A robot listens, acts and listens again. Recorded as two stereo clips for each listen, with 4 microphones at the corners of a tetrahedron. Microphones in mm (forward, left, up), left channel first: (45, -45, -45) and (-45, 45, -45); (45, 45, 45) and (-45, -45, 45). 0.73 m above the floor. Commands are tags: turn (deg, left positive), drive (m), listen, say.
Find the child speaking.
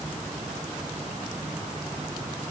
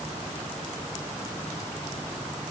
<listen/>
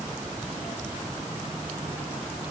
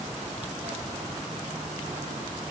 <listen/>
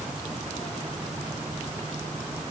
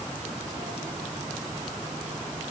<say>I can't make out a child speaking.</say>